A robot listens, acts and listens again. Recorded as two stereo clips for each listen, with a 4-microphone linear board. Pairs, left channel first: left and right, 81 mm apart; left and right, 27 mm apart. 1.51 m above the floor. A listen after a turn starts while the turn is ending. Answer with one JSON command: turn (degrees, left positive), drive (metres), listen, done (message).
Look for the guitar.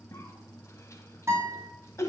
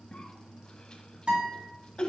{"turn": -40}
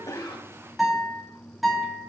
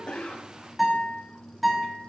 {"done": "Facing the guitar, 2 to 4 m away."}